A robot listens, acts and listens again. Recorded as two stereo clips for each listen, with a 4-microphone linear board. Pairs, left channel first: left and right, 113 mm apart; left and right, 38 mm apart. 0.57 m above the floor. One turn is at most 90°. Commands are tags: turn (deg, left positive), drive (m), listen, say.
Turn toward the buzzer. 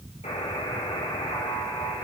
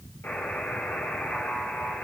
<turn deg="90"/>
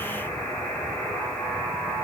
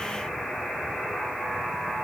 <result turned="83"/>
<turn deg="10"/>
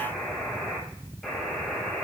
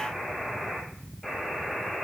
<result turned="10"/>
<say>Found it: a buzzer, straight ahead, 2 to 4 m away.</say>